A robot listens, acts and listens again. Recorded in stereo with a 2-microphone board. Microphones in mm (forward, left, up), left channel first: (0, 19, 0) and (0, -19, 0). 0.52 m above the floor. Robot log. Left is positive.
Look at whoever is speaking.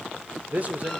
note: The man speaking: about 40° right or 140° right.
cmd yaw -40
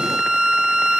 cmd idle
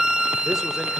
cmd idle
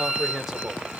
note: So it is at 10° right.
cmd yaw -10
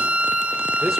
cmd idle
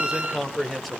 end: Found it: a man speaking, straight ahead.